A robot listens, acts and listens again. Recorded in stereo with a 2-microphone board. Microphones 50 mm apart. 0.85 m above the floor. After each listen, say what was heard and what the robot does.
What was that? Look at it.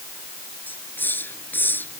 The hiss: about 45° left or 135° left. Turn 45° left.
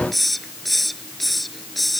Found it: a hiss, straight ahead.